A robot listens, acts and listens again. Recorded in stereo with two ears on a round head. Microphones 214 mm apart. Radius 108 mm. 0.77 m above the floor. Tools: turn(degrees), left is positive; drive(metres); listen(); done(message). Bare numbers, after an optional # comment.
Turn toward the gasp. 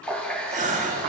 # The gasp: about 35° right or 145° right.
turn(-35)
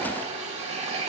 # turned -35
listen()
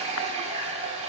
done("I heard a gasp, but can't make it out now. It was about straight ahead or 110° right.")